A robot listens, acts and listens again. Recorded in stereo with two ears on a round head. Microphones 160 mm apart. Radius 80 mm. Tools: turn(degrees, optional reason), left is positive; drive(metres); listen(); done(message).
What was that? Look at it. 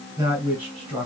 turn(degrees=-30)
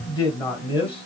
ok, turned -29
turn(degrees=30, reason="So it is at 30° left.")
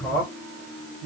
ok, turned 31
turn(degrees=15, reason="The man speaking is now 15° left.")
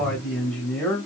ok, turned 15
turn(degrees=10, reason="The man speaking is now 10° left.")
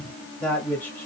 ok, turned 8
turn(degrees=10, reason="The man speaking is now 10° left.")
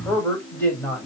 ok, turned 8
turn(degrees=10, reason="The man speaking is now 10° left.")
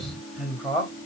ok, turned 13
done("Facing the man speaking, 2 to 4 m away.")